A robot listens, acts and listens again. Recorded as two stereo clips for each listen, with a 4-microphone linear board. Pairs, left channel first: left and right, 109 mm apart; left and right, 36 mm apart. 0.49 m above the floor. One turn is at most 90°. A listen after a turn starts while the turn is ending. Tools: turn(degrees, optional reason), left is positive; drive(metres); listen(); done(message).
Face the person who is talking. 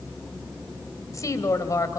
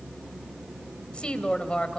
turn(degrees=30, reason="The woman speaking: about 30° left or 150° left.")
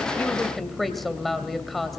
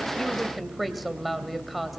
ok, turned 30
done("Facing the woman speaking, 2 to 4 m away.")